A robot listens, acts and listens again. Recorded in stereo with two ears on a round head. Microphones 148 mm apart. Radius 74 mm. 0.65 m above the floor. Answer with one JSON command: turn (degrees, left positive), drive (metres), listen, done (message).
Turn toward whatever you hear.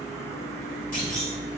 {"turn": 55}
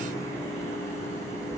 {"listen": true}
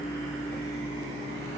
{"done": "I heard a clunk, but can't make it out now. It was about straight ahead or 70° left."}